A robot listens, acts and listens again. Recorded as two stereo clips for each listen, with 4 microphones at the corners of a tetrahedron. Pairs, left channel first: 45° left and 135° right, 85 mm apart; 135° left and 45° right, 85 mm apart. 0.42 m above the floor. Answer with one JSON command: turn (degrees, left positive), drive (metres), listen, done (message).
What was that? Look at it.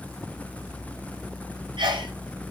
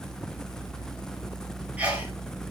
{"turn": -120}
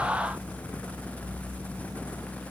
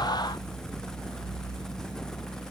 {"done": "Facing where the sneeze came from. I can't hear it now."}